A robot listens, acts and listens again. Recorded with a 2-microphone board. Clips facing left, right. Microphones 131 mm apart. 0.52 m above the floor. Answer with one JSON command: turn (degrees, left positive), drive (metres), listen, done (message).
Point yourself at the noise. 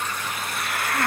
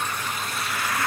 {"turn": 55}
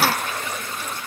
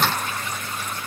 {"listen": true}
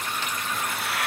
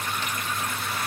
{"listen": true}
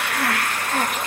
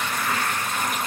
{"turn": 70}
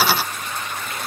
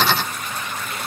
{"listen": true}
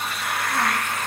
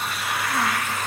{"done": "Found it: a hiss, straight ahead, 2 to 4 m away."}